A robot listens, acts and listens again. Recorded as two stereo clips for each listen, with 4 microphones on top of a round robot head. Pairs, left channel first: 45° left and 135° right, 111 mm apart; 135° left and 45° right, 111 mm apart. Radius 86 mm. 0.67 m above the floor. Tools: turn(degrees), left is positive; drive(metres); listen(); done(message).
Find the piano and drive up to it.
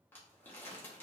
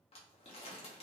listen()
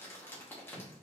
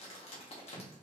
listen()
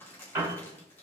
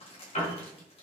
turn(degrees=155)
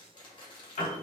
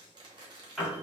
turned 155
turn(degrees=45)
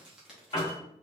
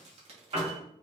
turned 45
turn(degrees=-10)
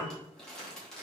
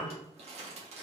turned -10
drive(metres=1.0)
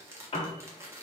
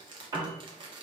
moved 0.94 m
drive(metres=1.0)
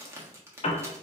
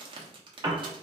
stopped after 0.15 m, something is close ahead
turn(degrees=15)
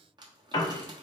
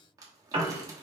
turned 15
done("I am next to the piano.")